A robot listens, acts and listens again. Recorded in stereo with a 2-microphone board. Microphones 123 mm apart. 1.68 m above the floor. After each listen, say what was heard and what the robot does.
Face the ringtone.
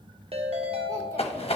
The ringtone: about 55° right or 125° right. Turn 55° right.
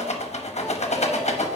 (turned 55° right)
Keep listening.
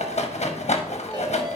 Keep listening.
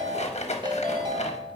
So it is at 45° right. Turn 45° right.
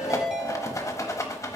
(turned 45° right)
Found it: a ringtone, straight ahead.